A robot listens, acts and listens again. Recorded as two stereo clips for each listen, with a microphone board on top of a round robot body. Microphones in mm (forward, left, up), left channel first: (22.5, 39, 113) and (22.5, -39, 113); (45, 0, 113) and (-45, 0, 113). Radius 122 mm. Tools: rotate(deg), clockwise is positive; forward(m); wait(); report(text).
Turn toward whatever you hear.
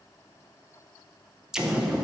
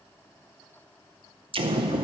rotate(175)
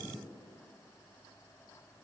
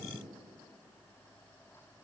report("Facing where the explosion came from. I can't hear it now.")